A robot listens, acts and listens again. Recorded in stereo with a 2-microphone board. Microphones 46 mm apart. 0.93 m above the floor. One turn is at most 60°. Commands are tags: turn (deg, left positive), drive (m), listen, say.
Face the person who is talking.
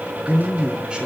<turn deg="-25"/>
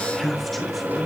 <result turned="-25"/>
<say>Facing the man speaking, 2 to 4 m away.</say>